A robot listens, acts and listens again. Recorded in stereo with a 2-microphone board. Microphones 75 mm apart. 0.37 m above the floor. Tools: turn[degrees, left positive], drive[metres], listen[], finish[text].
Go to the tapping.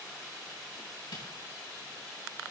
Action: listen[]
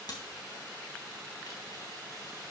Action: listen[]
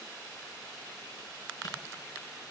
Action: finish[I can't make out tapping, only a camera shutter.]